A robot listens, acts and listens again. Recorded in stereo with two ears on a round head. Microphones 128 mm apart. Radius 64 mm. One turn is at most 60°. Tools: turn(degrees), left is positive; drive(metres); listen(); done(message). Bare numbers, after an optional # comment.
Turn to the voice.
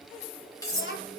turn(60)
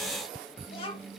# So it is at 40° left.
turn(40)
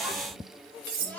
# The child speaking is now 10° left.
turn(10)
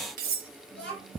done("Found it: a child speaking, straight ahead.")